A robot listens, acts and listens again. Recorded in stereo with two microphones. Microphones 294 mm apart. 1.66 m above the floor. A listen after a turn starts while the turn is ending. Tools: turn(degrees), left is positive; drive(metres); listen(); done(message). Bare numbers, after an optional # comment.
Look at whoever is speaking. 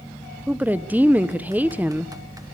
turn(-30)
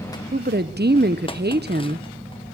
# So it is at 145° right.
turn(-145)
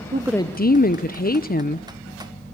# The woman speaking is now 30° left.
turn(30)
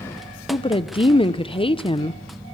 # The woman speaking is now 20° left.
turn(20)
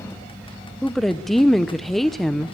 done("Facing the woman speaking.")